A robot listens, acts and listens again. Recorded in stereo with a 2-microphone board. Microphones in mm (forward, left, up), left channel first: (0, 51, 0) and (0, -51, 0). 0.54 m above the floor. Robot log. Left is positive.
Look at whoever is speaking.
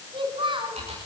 note: The child speaking: about 50° right or 130° right.
cmd yaw -50
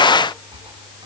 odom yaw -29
cmd idle
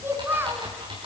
note: So it is at 20° right.
cmd yaw -20
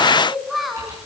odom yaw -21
end: Facing the child speaking.